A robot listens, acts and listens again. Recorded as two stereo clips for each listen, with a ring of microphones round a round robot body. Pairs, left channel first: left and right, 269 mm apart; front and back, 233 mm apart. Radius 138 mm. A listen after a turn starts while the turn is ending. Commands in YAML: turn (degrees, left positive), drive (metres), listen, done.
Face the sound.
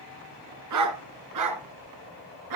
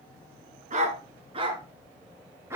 turn: -100
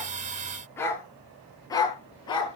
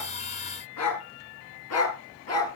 turn: 15
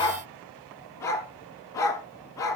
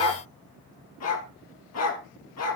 turn: 10
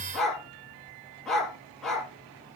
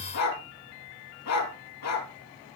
done: "Facing the dog barking, 2 to 4 m away."